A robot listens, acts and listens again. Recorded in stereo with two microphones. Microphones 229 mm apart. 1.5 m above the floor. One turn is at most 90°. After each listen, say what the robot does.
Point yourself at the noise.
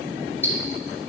Turn 30° left.
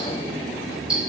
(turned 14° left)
Found it: ticking, straight ahead, 2 to 4 m away.